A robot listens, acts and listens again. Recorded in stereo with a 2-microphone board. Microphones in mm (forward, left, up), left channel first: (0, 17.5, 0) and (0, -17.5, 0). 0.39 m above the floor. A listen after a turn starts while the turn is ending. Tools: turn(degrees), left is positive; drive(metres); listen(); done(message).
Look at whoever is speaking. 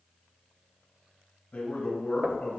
turn(degrees=55)
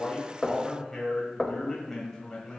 turn(degrees=15)
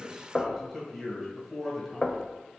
done("Facing the man speaking, 2 to 4 m away.")